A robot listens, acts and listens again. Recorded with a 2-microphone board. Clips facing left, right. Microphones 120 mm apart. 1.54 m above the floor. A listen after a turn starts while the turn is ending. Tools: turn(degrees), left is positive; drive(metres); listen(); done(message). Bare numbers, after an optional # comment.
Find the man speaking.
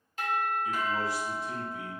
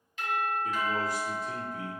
# The man speaking: about 45° right or 135° right.
turn(-45)
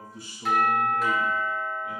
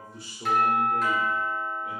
# So it is at 105° right.
turn(-105)
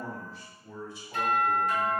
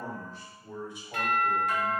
# The man speaking is now 20° right.
turn(-20)
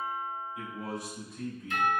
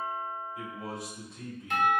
done("Facing the man speaking, 2 to 4 m away.")